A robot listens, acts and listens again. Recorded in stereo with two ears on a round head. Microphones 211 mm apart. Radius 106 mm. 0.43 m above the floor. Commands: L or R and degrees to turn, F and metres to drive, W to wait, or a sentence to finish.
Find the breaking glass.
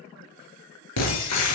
L90
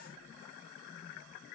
Facing where the breaking glass came from. I can't hear it now.